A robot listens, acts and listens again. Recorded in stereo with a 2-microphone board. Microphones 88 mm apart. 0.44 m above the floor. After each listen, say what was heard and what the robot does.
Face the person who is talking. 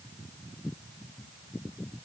Keep listening.
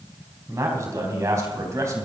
The man speaking: about 35° right or 145° right. Turn 35° right.
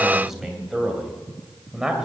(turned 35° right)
Facing the man speaking.